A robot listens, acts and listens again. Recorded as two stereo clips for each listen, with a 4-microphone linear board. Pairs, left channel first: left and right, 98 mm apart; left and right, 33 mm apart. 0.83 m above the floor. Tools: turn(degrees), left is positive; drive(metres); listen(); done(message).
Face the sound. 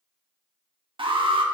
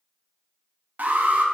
turn(degrees=-60)
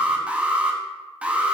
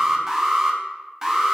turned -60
turn(degrees=-15)
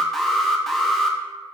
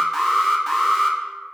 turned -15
done("Facing the alarm, under 1 m away.")